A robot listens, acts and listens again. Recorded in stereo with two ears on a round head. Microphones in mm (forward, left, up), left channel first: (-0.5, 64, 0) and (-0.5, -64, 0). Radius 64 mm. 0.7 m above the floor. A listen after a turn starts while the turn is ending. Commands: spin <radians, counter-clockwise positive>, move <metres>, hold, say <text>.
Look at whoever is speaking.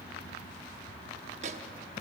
hold
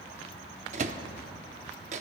hold
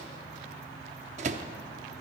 say I can't make out anyone speaking to turn to.